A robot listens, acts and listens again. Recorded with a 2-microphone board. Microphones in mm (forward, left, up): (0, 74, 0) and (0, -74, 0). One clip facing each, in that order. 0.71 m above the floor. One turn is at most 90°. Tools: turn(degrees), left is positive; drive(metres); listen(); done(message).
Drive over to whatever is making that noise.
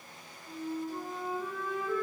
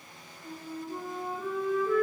turn(degrees=-65)
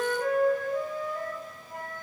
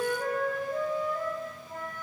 turn(degrees=-35)
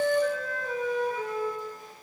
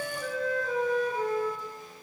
drive(metres=1.0)
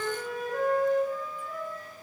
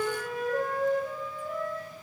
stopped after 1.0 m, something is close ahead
turn(degrees=-15)
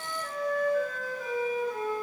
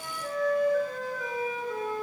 done("I am next to the flute.")